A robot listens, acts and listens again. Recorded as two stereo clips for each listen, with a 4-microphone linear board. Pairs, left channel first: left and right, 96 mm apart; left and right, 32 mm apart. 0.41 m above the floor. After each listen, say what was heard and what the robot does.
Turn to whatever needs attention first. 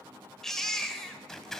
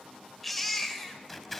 Turn 30° left.
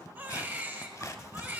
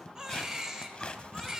So it is at 25° right. Turn 25° right.
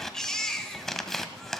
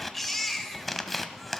Found it: a baby crying, straight ahead.